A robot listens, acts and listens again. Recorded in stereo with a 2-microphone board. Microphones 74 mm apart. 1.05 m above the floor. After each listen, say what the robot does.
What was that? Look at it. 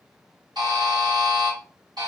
Turn 75° right.
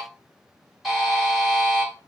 Facing the buzzer, 2 to 4 m away.